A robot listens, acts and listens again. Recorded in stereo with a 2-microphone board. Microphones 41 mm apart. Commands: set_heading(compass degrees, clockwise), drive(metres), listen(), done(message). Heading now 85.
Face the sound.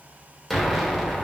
set_heading(55)
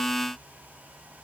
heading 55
listen()
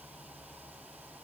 done("I heard an explosion, but can't make it out now. It was about 30° right or 150° left.")